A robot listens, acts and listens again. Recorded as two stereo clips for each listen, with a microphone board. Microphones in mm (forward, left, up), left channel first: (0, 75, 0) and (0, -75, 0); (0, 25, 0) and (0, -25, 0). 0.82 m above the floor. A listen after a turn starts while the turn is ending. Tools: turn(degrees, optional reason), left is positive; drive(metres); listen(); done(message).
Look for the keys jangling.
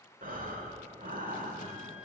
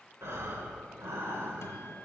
listen()
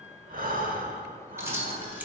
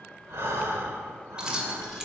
turn(degrees=-30)
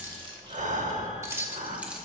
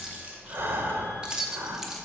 turn(degrees=-30)
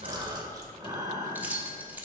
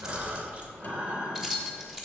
turn(degrees=-30)
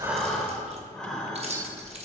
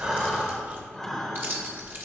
turn(degrees=-135, reason="So it is at 135° right.")
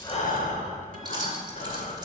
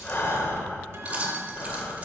listen()
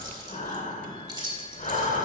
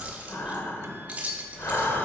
turn(degrees=-25, reason="The keys jangling is now 25° right.")
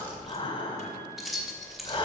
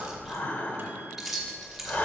done("Facing the keys jangling.")